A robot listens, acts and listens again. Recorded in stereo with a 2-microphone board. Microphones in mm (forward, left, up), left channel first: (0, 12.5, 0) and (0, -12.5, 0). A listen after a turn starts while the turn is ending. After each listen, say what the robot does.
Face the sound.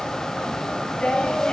Turn 40° left.
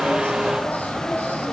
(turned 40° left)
Keep listening.
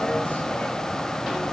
Keep listening.
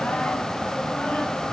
I heard singing, but can't make it out now. It was about straight ahead or 100° left.